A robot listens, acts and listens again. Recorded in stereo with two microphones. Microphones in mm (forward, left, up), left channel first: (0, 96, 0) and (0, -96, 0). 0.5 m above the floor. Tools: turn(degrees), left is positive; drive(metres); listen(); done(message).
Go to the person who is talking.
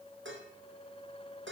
listen()
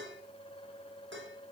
listen()
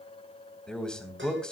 turn(degrees=30)
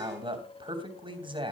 turn(degrees=-25)
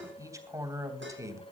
turn(degrees=-15)
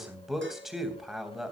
drive(metres=1.0)
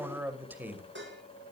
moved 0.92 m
turn(degrees=-10)
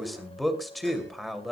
drive(metres=1.0)
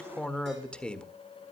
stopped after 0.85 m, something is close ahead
done("I am next to the man speaking.")